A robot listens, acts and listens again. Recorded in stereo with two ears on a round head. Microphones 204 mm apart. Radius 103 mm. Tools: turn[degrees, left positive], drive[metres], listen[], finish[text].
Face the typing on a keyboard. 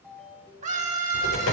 Thought: The typing on a keyboard: about 70° left or 110° left.
Action: turn[70]
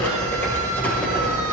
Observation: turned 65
Thought: So it is at 10° left.
Action: turn[10]
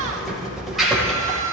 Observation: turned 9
Action: finish[Facing the typing on a keyboard.]